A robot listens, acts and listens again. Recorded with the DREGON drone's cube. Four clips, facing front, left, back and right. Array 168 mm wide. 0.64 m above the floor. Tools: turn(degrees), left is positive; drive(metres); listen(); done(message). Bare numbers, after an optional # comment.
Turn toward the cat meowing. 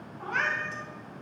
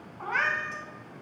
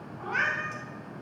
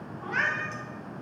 # The cat meowing: 90° left.
turn(90)
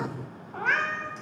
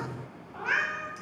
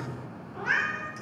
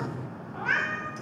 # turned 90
# The cat meowing is now 10° right.
turn(-10)
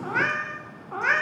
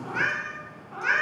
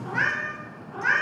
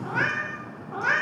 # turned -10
# The cat meowing is now 25° right.
turn(-25)
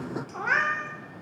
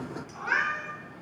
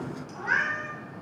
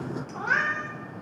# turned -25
# The cat meowing is now 35° right.
turn(-35)
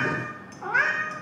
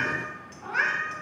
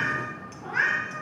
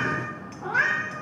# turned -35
# The cat meowing is now 20° right.
turn(-20)
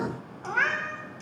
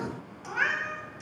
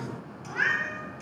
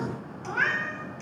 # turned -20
done("Found it: a cat meowing, straight ahead.")